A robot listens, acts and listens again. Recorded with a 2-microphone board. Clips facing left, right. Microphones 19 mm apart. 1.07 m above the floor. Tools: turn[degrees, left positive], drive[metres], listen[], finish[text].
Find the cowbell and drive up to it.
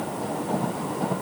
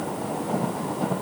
Action: listen[]
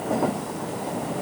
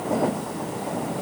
Action: listen[]
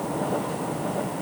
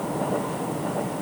Action: finish[I can't make out a cowbell.]